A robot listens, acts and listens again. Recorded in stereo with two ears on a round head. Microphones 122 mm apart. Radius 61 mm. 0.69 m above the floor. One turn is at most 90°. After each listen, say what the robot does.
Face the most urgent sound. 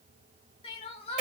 Turn 40° left.
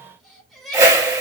Facing the crying.